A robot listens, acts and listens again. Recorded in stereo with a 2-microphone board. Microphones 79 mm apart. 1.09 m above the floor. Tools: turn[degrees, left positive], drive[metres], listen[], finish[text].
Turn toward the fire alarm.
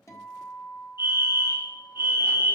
Thought: The fire alarm: about 65° left or 115° left.
Action: turn[65]
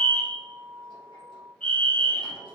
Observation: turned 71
Thought: So it is at 20° left.
Action: turn[20]
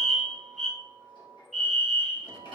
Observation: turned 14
Action: finish[Facing the fire alarm.]